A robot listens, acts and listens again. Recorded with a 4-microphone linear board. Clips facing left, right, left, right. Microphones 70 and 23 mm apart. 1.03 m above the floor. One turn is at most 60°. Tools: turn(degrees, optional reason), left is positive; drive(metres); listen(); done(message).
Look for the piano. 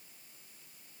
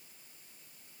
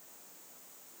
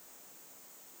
listen()
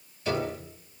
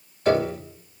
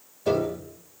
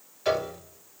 turn(degrees=-60, reason="The piano: about 70° right or 110° right.")
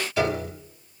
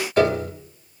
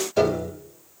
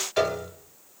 turn(degrees=-55, reason="So it is at 55° right.")
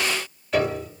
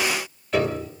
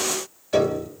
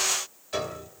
done("Found it: a piano, straight ahead, 2 to 4 m away.")